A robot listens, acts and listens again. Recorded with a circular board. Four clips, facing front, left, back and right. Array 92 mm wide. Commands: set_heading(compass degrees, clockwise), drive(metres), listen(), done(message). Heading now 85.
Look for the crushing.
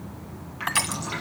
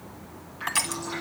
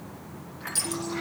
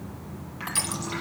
set_heading(65)
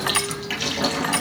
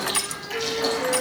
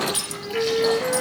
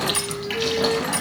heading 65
done("Found it: crushing, straight ahead, under 1 m away.")